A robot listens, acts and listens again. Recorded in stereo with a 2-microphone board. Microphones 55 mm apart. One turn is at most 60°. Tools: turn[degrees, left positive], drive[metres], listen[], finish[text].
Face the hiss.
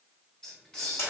Action: turn[30]
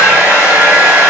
Action: listen[]
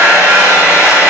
Action: listen[]
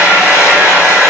Action: finish[I heard a hiss, but can't make it out now. It was about 20° right or 140° left.]